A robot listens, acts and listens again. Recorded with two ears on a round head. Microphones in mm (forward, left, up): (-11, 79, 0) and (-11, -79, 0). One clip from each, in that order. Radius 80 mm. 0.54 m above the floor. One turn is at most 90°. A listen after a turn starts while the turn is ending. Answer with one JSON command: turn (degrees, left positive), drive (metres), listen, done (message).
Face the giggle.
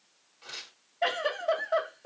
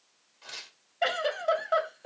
{"turn": -65}
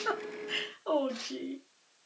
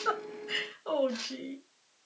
{"turn": -45}
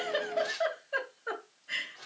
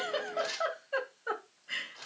{"turn": -10}
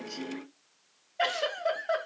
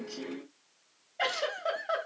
{"done": "Facing the giggle, 2 to 4 m away."}